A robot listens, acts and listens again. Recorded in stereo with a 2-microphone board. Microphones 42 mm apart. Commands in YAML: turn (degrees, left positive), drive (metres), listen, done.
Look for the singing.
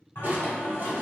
turn: 70
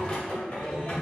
turn: 35
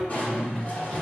turn: 20
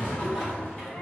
turn: 10
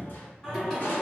done: "Found it: singing, straight ahead, 2 to 4 m away."